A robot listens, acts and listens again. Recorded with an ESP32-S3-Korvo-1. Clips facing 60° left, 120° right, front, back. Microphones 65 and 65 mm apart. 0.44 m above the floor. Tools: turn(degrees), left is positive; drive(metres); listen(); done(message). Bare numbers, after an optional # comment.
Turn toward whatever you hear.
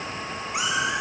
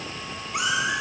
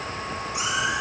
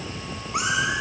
# The cat meowing: 140° left.
turn(140)
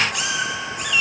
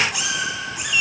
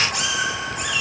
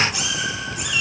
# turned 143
# The cat meowing is now 45° right.
turn(-45)
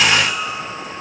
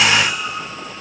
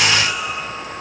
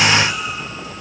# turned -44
# The cat meowing is now 25° right.
turn(-25)
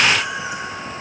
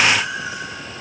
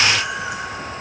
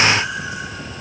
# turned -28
# The cat meowing is now 10° right.
turn(-10)
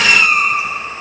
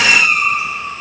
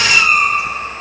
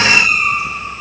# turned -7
done("Found it: a cat meowing, straight ahead, 1 to 2 m away.")